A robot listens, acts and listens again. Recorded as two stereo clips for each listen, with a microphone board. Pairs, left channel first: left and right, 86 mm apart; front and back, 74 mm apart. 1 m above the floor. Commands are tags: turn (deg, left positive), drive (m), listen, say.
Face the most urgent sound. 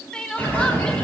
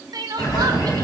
<turn deg="170"/>
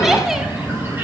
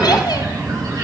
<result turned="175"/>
<listen/>
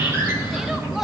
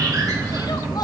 <listen/>
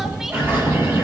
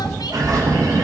<say>I heard crying from this way, but can't make it out now.</say>